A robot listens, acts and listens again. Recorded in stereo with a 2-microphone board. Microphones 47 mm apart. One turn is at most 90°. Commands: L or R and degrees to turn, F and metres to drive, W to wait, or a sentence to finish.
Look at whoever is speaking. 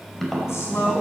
L90
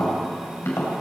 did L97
W
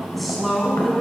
Facing the woman speaking.